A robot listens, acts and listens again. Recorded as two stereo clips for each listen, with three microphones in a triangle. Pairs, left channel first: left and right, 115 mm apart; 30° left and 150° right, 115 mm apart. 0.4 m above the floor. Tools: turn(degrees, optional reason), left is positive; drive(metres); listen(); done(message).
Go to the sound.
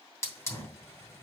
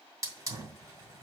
turn(degrees=155, reason="The hiss: 155° left.")
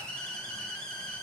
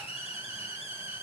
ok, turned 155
turn(degrees=10, reason="The hiss is now 10° left.")
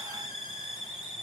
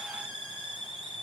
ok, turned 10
drive(metres=1.0)
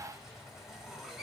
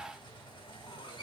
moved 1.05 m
drive(metres=1.0)
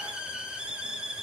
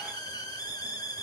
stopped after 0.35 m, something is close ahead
turn(degrees=-10, reason="The hiss is now 10° right.")
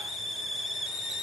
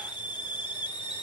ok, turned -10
done("Arrived at the hiss, straight ahead.")